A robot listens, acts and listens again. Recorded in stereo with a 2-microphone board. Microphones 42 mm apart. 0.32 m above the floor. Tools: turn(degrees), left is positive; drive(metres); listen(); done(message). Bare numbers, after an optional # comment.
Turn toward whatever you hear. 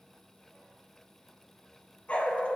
# The dog barking: about 35° left or 145° left.
turn(35)
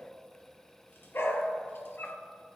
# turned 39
# So it is at 115° left.
turn(115)
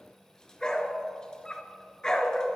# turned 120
# The dog barking is now 15° left.
turn(15)
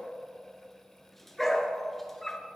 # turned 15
done("Facing the dog barking.")